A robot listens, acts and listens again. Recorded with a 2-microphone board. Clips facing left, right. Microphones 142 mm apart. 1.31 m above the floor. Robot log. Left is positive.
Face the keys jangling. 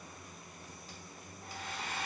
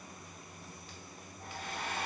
cmd idle
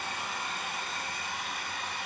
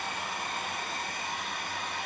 cmd idle
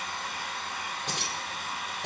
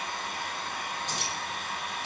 cmd yaw +90
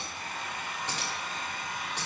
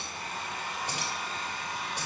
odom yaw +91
note: So it is at 10° right.
cmd yaw -10
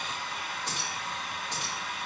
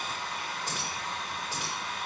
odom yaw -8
end: Facing the keys jangling, 2 to 4 m away.